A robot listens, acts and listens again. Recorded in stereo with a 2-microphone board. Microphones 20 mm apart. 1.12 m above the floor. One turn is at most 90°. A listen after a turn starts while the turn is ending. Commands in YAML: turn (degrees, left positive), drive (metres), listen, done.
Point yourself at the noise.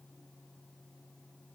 listen: true
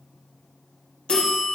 turn: 65
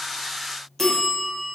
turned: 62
turn: 15
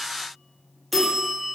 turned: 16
done: "Facing the bell, under 1 m away."